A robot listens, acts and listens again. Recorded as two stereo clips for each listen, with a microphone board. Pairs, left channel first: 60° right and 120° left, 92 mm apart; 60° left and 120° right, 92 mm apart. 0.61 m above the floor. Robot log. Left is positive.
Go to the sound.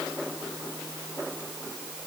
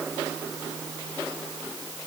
cmd idle
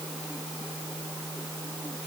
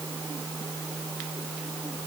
cmd idle
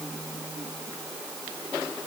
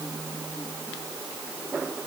end: I can't make out anything to turn to.